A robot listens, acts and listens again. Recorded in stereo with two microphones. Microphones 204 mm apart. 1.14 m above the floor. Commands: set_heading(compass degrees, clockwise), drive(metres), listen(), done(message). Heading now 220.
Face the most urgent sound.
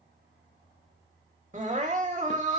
set_heading(255)
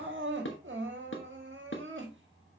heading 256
set_heading(1)
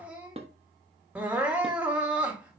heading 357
done("Facing the crying.")